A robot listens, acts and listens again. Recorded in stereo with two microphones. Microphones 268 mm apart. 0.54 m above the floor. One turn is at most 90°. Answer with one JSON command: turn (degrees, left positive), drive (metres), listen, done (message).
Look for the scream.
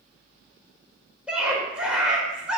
{"turn": -30}
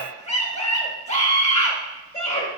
{"turn": 25}
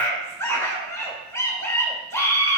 {"turn": 10}
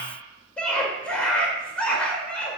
{"done": "Found it: a scream, straight ahead, 1 to 2 m away."}